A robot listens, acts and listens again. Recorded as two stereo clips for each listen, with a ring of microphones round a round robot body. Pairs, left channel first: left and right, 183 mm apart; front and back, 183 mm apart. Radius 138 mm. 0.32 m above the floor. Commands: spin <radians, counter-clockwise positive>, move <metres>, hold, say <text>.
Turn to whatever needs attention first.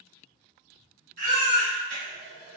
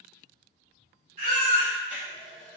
spin -2.27
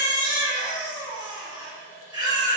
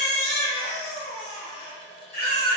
spin -0.44
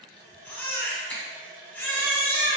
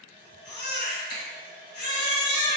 spin 0.17
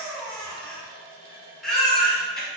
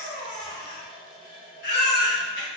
say Facing the baby crying, 1 to 2 m away.